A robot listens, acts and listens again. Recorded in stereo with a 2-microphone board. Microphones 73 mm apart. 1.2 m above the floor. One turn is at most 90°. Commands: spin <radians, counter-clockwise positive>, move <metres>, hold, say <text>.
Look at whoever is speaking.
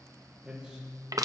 spin -0.52
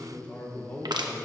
spin 0.35
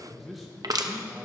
say Found it: a man speaking, straight ahead, 1 to 2 m away.